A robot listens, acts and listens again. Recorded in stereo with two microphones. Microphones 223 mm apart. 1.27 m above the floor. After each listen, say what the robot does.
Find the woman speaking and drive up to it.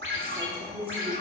Turn 25° right.
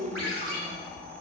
Turn 130° right.
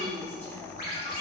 Turn 10° left.
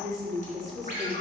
Drive 1.0 m forward.
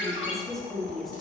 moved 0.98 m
Drive 1.0 m forward.
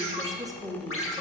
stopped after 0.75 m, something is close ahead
I am next to the woman speaking.